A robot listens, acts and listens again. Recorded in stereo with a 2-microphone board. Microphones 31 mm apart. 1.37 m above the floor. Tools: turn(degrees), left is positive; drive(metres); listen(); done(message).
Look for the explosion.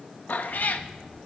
turn(degrees=-30)
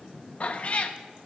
listen()
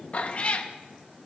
done("I heard an explosion, but can't make it out now. It was about 25° left or 145° right.")